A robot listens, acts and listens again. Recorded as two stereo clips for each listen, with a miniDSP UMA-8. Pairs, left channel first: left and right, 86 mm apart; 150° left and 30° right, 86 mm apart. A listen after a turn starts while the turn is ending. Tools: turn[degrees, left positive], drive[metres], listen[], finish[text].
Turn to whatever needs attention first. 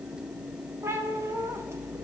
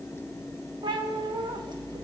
Action: listen[]
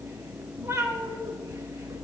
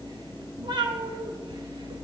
Action: listen[]
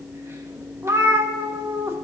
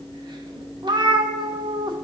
Action: finish[I can't make out anything urgent, only a cat meowing.]